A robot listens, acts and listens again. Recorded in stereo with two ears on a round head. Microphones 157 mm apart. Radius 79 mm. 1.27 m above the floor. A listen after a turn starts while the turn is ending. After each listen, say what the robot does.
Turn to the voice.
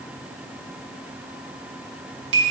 Keep listening.
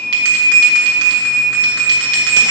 Keep listening.
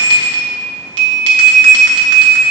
I can't make out anyone speaking to turn to.